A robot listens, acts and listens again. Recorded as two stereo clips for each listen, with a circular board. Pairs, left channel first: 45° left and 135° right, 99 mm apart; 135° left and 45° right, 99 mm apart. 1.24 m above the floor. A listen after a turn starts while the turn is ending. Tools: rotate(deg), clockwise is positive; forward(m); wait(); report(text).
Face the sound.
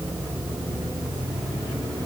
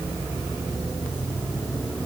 wait()
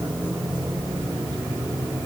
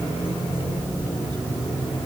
wait()
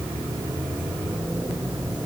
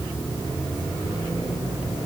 report("I can't make out anything to turn to.")